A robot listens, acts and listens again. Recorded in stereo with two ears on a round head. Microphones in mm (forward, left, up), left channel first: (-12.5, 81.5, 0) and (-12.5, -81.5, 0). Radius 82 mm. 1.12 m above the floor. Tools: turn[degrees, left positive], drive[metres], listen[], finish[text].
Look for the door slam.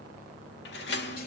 Thought: The door slam: about 65° left or 115° left.
Action: turn[65]
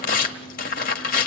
Action: listen[]
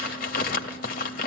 Action: finish[I heard a door slam, but can't make it out now. It was about straight ahead or 50° left.]